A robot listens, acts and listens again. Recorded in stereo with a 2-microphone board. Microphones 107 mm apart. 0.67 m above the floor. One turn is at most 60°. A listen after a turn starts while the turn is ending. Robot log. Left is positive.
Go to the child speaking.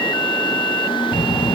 cmd yaw -30
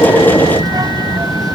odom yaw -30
note: So it is at 140° right.
cmd yaw -60
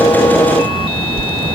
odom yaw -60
note: The child speaking is now 65° right.
cmd yaw -60
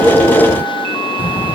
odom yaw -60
note: The child speaking is now 15° right.
cmd yaw -15
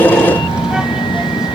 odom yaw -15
cmd fwd 1.0
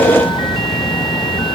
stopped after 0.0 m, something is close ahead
end: Something is in my way. I am facing the child speaking but have not reached it.